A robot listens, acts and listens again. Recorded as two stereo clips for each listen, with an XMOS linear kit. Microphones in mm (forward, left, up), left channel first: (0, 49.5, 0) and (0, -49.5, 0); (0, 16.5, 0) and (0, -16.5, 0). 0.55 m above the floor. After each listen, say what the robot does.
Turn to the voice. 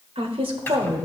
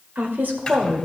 Turn 65° right.
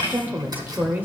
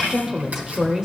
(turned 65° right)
Turn 20° right.
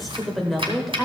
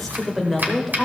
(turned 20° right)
Found it: a woman speaking, straight ahead, 1 to 2 m away.